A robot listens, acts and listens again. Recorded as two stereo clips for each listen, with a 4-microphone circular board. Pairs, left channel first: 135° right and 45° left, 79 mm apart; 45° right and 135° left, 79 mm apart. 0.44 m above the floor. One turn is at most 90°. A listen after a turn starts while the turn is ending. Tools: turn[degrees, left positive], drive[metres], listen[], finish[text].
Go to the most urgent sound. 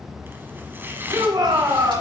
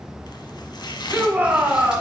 Thought: The shout: 65° left.
Action: turn[65]
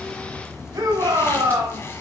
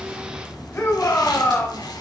Action: drive[1.0]
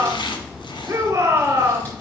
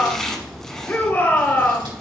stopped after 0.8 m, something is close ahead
Action: finish[I am next to the shout.]